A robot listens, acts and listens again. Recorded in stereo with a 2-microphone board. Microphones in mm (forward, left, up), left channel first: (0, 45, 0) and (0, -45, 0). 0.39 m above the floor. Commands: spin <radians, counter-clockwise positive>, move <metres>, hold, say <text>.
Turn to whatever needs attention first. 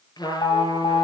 spin 1.13
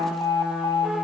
spin 0.70
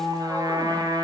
hold
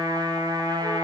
hold
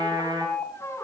spin 0.17
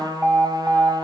say Facing the alarm.